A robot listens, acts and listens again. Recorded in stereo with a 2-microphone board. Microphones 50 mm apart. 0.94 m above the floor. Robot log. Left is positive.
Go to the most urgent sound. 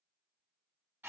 cmd idle
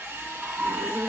note: The scream: about 70° right or 110° right.
cmd yaw -70
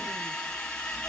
cmd idle
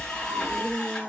note: So it is at 25° right.
cmd yaw -25
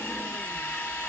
cmd idle
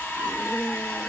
cmd fwd 1.0
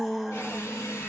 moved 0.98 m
cmd fwd 1.0
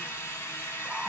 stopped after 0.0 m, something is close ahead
cmd idle
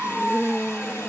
end: I am next to the scream.